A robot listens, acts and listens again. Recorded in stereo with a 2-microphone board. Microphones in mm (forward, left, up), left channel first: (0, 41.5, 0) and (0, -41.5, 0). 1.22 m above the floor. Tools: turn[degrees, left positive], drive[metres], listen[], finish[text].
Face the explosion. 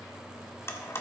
Action: listen[]
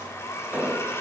Thought: The explosion: about 20° right or 160° right.
Action: turn[-20]
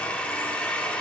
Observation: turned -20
Action: listen[]
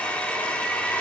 Action: finish[I heard an explosion, but can't make it out now. It was about straight ahead or 140° right.]